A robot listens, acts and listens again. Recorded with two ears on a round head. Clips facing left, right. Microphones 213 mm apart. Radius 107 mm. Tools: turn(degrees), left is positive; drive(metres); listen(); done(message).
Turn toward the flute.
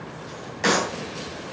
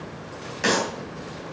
listen()
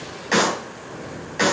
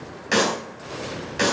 listen()
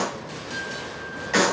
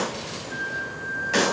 turn(degrees=-45)
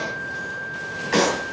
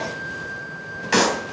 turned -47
turn(degrees=-90)
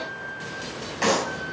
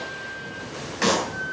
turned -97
turn(degrees=10)
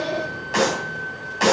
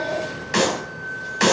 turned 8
done("Facing the flute, over 4 m away.")